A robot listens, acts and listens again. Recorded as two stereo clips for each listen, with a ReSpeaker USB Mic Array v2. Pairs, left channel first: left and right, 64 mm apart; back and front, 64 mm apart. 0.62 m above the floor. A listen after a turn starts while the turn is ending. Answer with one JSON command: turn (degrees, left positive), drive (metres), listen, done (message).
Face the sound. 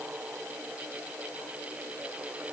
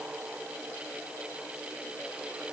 {"listen": true}
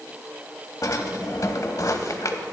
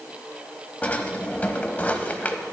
{"turn": 115}
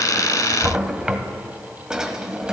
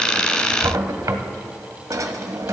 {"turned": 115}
{"turn": -10}
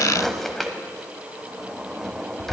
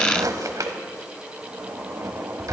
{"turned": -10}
{"done": "Facing the drawer, under 1 m away."}